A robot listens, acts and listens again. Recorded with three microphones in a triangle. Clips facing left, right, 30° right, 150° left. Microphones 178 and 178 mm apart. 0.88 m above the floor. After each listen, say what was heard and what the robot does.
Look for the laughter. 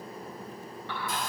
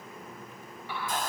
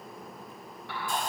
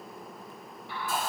Keep listening.
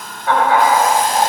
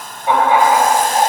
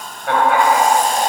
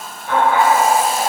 The laughter: 20° right. Turn 20° right.
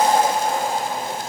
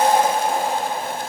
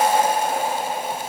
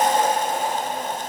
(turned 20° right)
The laughter is now 15° right. Turn 15° right.
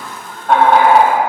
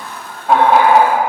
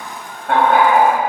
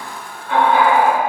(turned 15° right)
The laughter is now 10° right. Turn 10° right.
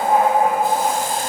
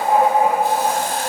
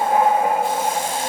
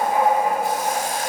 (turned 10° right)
Facing the laughter.